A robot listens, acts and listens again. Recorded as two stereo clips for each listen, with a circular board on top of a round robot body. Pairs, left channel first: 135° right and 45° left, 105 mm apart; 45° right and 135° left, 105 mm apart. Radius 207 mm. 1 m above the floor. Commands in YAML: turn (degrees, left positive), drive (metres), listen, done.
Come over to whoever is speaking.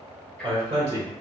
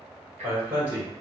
turn: 70
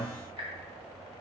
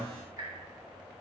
listen: true
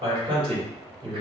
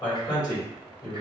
turn: 10
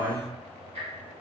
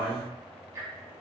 drive: 1.0
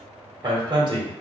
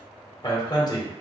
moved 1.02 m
drive: 1.0
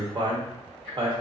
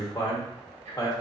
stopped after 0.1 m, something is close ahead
done: "I am next to the man speaking."